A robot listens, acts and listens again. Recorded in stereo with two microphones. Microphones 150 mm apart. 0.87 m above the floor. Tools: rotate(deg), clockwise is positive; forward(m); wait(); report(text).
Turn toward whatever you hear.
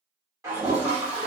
rotate(20)
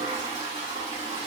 rotate(135)
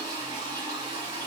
rotate(25)
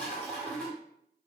rotate(-10)
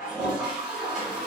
report("Facing the toilet flushing, 1 to 2 m away.")